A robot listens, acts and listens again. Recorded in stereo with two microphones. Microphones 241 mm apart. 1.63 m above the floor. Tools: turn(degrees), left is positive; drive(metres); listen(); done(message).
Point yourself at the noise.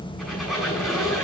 turn(degrees=30)
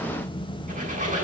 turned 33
listen()
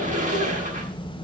turn(degrees=-30)
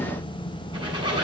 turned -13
turn(degrees=-20)
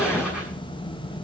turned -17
listen()
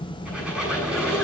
done("Facing the squeak, over 4 m away.")